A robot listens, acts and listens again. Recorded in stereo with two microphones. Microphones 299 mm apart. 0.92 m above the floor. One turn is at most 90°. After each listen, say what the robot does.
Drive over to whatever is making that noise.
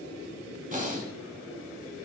Turn 25° right.
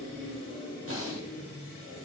Turn 90° right.
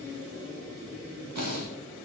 Turn 85° right.
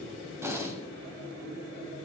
Turn 10° right.
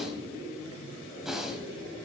Drive 1.0 m forward.
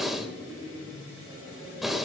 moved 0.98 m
Drive 1.0 m forward.
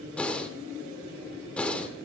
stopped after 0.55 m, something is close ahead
I am next to the breathing.